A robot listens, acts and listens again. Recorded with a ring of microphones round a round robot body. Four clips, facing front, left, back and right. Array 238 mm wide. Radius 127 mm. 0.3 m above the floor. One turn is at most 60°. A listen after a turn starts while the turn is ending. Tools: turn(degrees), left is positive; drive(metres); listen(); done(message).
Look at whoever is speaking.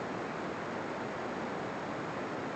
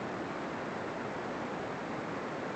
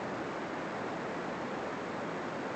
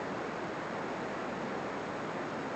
listen()
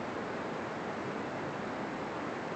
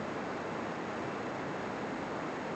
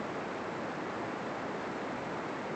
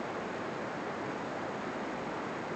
listen()
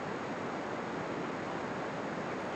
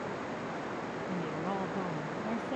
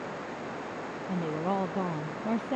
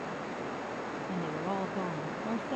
turn(degrees=-60)
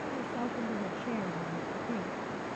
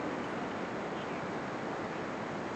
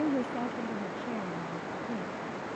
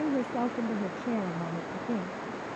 turn(degrees=-60)
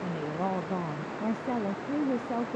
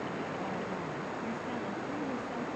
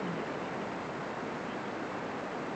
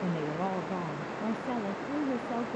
turn(degrees=-25)
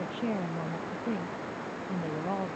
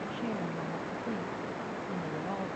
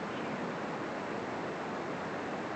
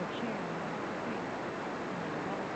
listen()
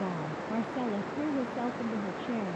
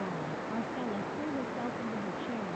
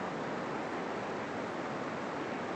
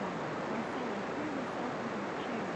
turn(degrees=10)
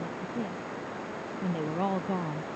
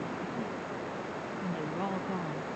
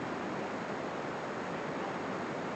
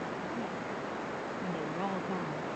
done("Found it: a woman speaking, straight ahead.")